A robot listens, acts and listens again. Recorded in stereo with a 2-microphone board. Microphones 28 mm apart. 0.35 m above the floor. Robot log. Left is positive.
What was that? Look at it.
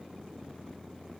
cmd idle
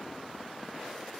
cmd idle
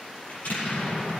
note: The explosion: about 70° left or 110° left.
cmd yaw +70
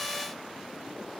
cmd idle
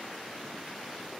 end: I heard an explosion, but can't make it out now. It was about straight ahead or 40° left.